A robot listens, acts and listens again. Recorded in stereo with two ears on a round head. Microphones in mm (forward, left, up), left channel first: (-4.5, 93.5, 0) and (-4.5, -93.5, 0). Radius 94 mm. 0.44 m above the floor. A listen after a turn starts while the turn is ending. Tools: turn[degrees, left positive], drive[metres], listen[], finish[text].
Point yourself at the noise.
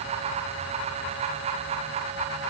Action: listen[]
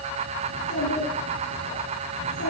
Thought: The child speaking: about 60° left or 120° left.
Action: turn[60]
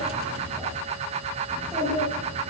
Action: finish[Facing the child speaking, over 4 m away.]